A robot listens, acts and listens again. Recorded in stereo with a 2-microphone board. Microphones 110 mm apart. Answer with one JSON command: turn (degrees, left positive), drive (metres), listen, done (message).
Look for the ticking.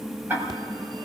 {"turn": -20}
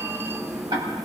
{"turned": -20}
{"turn": -140}
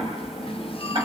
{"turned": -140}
{"turn": -45}
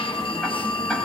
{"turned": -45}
{"listen": true}
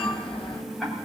{"done": "Facing the ticking, over 4 m away."}